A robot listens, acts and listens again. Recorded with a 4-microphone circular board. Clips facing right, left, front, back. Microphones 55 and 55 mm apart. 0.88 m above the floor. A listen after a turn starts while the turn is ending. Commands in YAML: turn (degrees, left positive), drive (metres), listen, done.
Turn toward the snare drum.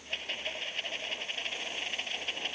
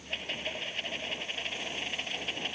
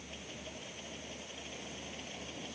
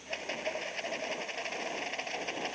listen: true
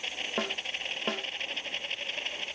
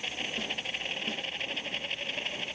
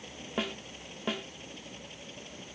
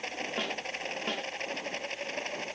turn: -85
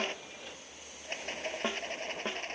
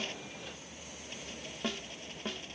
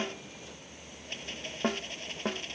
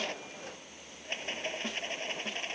turn: -25
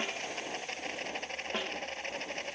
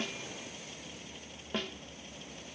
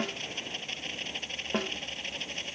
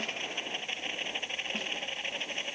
turn: -10
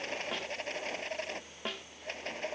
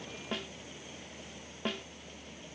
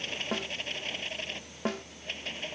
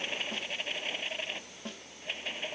done: "Found it: a snare drum, straight ahead."